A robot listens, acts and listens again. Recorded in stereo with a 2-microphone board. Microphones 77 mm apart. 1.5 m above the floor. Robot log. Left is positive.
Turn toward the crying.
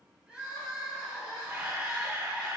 cmd yaw -30
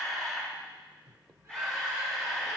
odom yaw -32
cmd idle
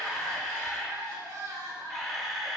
note: So it is at 135° right.
cmd yaw -135
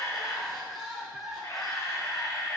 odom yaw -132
end: Facing the crying, 2 to 4 m away.